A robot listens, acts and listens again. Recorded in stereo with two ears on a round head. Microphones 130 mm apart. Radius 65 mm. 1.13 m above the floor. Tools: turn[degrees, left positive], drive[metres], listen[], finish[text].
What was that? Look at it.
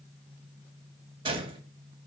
Thought: The gunshot: about 35° right or 145° right.
Action: turn[-35]
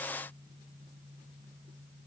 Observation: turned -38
Action: listen[]
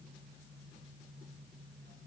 Action: finish[I heard a gunshot, but can't make it out now. It was about straight ahead or 105° right.]